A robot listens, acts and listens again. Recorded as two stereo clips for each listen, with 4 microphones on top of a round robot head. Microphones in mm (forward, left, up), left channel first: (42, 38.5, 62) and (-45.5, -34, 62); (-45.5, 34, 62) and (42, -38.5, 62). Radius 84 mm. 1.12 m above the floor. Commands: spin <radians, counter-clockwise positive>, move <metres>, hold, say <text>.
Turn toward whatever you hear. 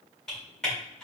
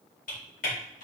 spin 2.18
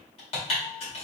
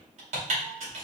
say Facing the typing on a keyboard, 1 to 2 m away.